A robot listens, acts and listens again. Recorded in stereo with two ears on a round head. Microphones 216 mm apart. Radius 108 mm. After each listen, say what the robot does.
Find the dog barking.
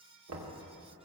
Keep listening.
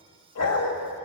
Turn 65° left.
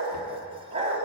Turn 30° right.
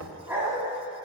Turn 10° right.
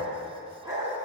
Turn 15° right.
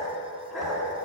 Facing the dog barking, 2 to 4 m away.